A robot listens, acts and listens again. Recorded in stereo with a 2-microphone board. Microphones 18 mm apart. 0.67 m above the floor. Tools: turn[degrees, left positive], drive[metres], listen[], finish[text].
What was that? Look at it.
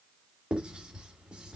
Thought: The writing: about 65° right or 115° right.
Action: turn[-65]
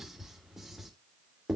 Thought: So it is at 20° right.
Action: turn[-20]
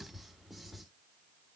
Action: listen[]
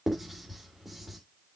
Action: finish[Facing the writing.]